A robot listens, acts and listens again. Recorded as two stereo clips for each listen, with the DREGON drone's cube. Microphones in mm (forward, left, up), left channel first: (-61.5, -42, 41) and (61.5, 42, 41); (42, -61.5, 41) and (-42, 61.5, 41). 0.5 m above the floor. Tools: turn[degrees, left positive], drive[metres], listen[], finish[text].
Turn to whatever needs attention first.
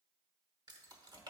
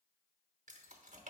Action: listen[]
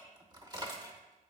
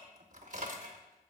Action: listen[]
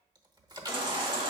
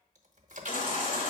Thought: The baby crying: 25° right.
Action: turn[-25]
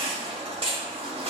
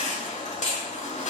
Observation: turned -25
Thought: The baby crying is now 15° right.
Action: turn[-15]
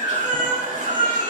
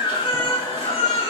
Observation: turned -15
Action: finish[Facing the baby crying.]